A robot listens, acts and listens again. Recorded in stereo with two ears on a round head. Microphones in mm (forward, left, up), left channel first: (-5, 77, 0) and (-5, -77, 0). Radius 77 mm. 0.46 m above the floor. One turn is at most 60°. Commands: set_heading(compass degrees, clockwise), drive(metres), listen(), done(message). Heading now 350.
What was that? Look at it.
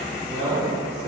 set_heading(30)
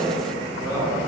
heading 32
set_heading(47)
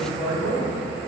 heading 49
set_heading(64)
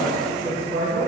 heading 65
set_heading(95)
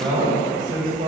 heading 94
set_heading(124)
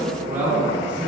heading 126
set_heading(136)
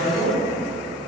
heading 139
done("Facing the man speaking, 1 to 2 m away.")